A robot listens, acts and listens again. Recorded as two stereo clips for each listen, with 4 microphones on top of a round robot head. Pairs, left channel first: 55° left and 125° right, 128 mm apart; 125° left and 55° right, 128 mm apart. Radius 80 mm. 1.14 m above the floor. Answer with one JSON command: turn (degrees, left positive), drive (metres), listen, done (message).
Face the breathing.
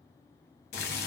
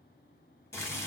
{"listen": true}
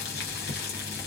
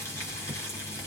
{"listen": true}
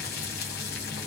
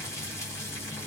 {"done": "I can't make out breathing, only boiling."}